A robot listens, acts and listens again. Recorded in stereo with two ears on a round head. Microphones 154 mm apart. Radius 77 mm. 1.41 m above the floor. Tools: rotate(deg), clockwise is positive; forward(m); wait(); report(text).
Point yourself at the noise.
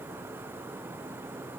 wait()
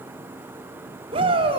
rotate(35)
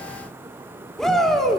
report("Facing the shout, over 4 m away.")